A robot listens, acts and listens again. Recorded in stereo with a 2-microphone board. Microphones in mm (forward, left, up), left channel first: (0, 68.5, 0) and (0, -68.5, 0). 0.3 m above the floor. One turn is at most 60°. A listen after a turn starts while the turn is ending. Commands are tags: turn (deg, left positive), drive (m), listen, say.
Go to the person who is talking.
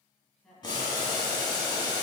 <turn deg="30"/>
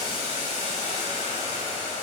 <listen/>
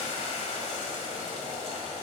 <listen/>
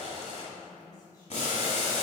<turn deg="60"/>
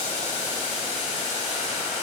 <turn deg="60"/>
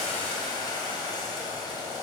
<turn deg="25"/>
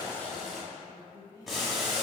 <turn deg="30"/>
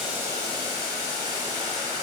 <listen/>
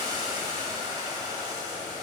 <listen/>
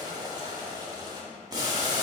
<say>Facing where the woman speaking came from. I can't hear it now. I did not reach it.</say>